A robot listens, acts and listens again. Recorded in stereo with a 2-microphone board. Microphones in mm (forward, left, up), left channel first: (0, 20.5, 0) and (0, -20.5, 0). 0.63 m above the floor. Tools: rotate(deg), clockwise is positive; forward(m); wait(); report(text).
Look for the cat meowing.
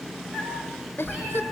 rotate(20)
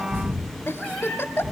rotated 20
rotate(-30)
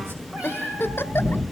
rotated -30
rotate(35)
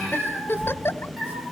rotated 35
report("Facing the cat meowing, over 4 m away.")